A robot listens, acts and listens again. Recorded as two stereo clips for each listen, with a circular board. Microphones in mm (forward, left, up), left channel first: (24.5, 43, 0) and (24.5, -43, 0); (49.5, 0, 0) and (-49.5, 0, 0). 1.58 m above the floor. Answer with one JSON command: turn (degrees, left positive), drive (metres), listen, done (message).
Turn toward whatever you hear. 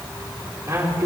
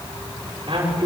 {"turn": -140}
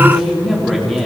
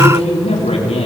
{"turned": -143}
{"done": "Found it: a man speaking, straight ahead."}